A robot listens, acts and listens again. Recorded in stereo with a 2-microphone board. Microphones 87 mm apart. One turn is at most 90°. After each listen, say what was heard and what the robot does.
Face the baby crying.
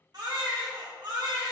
The baby crying: about 55° right or 125° right. Turn 55° right.
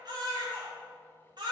So it is at 65° right. Turn 65° right.
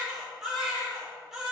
Facing the baby crying.